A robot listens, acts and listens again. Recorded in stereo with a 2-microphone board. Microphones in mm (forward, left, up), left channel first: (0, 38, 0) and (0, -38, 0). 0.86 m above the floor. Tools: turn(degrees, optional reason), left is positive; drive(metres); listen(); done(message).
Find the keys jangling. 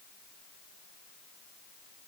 listen()
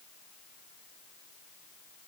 listen()
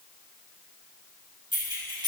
turn(degrees=-90)
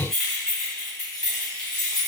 turn(degrees=10, reason="So it is at 10° left.")
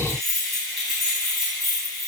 done("Facing the keys jangling.")